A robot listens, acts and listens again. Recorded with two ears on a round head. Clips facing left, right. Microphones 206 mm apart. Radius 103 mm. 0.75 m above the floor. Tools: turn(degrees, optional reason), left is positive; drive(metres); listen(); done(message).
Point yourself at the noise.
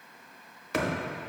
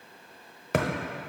turn(degrees=-45, reason="The thud: about 45° right or 135° right.")
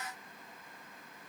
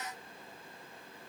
listen()
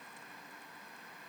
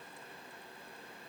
done("I heard a thud, but can't make it out now. It was about straight ahead or 90° right.")